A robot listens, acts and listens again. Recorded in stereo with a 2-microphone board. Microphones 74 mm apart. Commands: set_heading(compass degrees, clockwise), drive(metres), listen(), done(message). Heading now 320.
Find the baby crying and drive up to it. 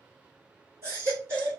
set_heading(355)
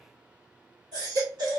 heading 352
set_heading(97)
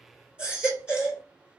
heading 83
set_heading(98)
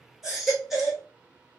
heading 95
drive(1.0)
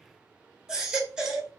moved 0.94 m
set_heading(105)
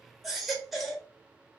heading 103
drive(1.0)
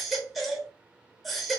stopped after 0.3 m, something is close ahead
done("Arrived at the baby crying, straight ahead.")